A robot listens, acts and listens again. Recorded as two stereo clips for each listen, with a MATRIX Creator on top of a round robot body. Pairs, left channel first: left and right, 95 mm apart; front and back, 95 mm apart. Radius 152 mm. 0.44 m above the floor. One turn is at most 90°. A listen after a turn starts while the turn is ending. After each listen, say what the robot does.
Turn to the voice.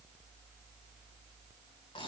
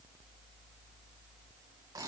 Keep listening.
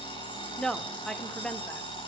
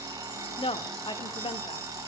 Turn 10° left.
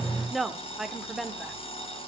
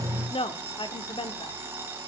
Found it: a woman speaking, straight ahead.